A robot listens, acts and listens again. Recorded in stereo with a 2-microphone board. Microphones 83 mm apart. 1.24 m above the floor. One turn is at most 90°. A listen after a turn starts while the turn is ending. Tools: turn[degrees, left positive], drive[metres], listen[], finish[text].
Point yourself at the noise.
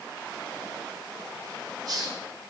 Thought: The hiss: about 55° right or 125° right.
Action: turn[-55]
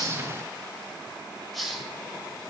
Action: finish[Facing the hiss.]